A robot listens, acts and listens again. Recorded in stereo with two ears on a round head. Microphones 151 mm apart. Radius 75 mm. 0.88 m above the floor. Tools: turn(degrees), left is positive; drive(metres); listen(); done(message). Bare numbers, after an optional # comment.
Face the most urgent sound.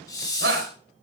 # The shout: about 60° right or 120° right.
turn(-60)
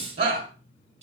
# So it is at 60° right.
turn(-60)
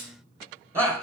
# The shout is now 15° right.
turn(-15)
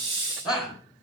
done("Found it: a shout, straight ahead.")